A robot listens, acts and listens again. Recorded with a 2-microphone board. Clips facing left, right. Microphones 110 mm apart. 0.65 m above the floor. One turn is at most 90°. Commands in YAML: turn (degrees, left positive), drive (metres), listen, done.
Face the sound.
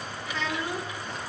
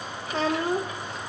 turn: -40
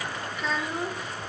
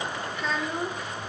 done: "Found it: a child speaking, straight ahead."